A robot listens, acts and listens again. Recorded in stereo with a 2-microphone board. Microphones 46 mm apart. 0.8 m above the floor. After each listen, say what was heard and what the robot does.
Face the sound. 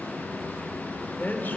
The man speaking: about 45° left or 135° left. Turn 45° left.
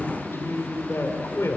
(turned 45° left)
So it is at 110° left. Turn 110° left.
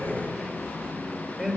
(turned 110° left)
Facing the man speaking, 2 to 4 m away.